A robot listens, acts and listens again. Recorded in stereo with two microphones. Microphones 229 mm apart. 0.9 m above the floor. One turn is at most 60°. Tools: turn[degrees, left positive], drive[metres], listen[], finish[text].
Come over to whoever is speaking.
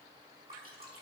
Action: listen[]
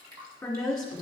Action: turn[30]
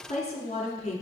Thought: So it is at 150° left.
Action: turn[60]
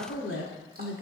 Thought: The woman speaking is now 80° left.
Action: turn[60]
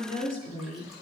Thought: The woman speaking is now 40° left.
Action: turn[40]
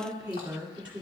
Action: drive[1.0]
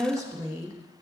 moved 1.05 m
Thought: The woman speaking is now 15° right.
Action: turn[-15]
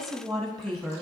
Action: drive[1.0]
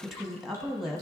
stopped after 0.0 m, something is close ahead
Action: finish[I am next to the woman speaking.]